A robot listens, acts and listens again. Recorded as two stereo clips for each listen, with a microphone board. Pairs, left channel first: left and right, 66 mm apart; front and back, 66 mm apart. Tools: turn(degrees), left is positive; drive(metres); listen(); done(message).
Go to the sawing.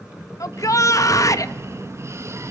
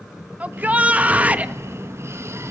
listen()
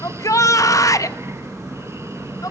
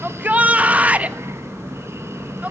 listen()
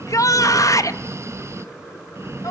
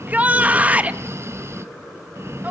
done("I can't make out sawing to turn to.")